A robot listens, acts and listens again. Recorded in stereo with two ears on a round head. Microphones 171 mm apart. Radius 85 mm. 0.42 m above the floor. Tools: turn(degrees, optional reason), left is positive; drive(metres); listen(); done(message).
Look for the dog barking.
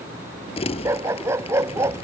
turn(degrees=-30)
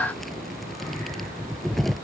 listen()
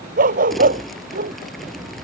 turn(degrees=-135, reason="So it is at 135° right.")
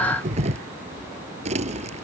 listen()
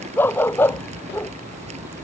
turn(degrees=10, reason="The dog barking is now 10° left.")
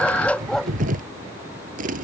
done("Found it: a dog barking, straight ahead.")